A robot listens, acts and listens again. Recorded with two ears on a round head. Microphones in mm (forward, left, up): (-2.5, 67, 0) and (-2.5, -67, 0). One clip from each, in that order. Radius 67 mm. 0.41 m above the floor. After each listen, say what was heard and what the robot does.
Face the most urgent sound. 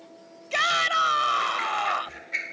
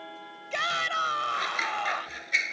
The shout: about 20° left or 160° left. Turn 20° left.
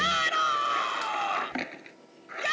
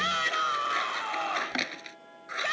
Found it: a shout, straight ahead.